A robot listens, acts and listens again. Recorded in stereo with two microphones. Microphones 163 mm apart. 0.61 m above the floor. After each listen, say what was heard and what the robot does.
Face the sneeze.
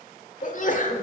The sneeze: about 55° left or 125° left. Turn 55° left.
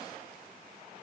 Keep listening.
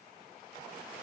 I heard a sneeze, but can't make it out now. It was about straight ahead or 70° left.